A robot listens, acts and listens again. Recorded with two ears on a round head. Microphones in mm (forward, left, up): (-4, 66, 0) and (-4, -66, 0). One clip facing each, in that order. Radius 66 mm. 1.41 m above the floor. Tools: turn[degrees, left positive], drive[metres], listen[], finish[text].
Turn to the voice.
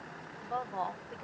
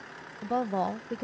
Thought: The woman speaking: about 50° right or 130° right.
Action: turn[-50]
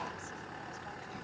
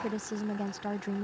Thought: So it is at 80° right.
Action: turn[-80]
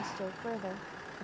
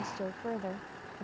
Action: finish[Facing the woman speaking.]